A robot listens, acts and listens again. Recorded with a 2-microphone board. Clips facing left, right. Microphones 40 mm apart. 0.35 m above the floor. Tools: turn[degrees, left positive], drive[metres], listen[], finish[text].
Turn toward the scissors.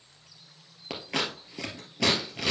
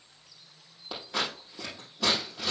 Action: turn[90]
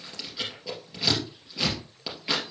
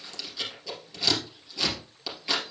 Thought: So it is at 15° left.
Action: turn[15]
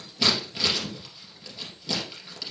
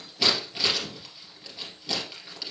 Action: finish[Found it: scissors, straight ahead, 2 to 4 m away.]